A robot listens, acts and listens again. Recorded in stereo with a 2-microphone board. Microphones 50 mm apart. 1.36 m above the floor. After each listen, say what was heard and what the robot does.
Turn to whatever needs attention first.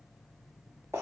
Keep listening.
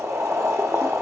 Keep listening.
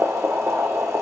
I can't make out anything urgent to turn to.